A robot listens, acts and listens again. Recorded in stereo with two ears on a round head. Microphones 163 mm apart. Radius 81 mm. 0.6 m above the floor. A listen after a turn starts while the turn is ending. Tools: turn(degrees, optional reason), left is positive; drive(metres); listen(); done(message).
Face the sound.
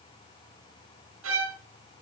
turn(degrees=-90)
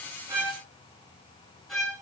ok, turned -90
done("Found it: a violin, straight ahead.")